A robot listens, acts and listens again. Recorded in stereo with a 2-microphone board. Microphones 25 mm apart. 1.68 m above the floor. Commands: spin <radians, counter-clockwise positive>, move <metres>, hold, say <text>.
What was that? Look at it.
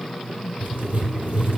spin -1.57
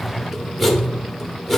say Found it: writing, straight ahead.